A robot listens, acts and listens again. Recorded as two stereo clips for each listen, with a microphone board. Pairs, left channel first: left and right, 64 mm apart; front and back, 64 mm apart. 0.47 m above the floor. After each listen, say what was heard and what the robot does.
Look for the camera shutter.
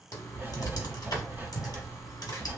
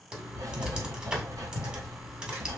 Keep listening.
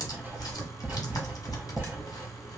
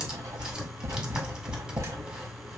Keep listening.
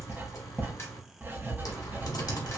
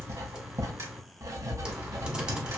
I can't make out a camera shutter, only writing and typing on a keyboard.